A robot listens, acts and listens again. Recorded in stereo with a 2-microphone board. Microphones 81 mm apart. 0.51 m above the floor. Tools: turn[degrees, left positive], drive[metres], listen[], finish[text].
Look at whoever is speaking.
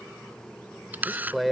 Action: turn[30]
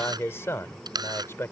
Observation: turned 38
Thought: So it is at 140° left.
Action: turn[140]
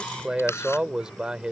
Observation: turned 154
Thought: The man speaking is now 10° right.
Action: turn[-10]
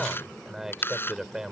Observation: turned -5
Action: finish[Found it: a man speaking, straight ahead.]